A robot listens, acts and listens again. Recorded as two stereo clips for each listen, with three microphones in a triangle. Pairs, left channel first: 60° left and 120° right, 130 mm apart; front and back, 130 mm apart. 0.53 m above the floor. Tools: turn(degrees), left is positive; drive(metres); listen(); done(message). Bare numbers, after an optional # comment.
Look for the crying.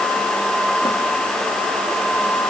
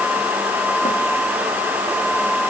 listen()
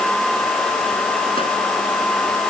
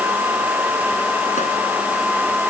listen()
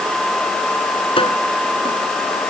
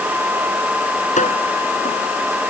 done("I can't make out crying to turn to.")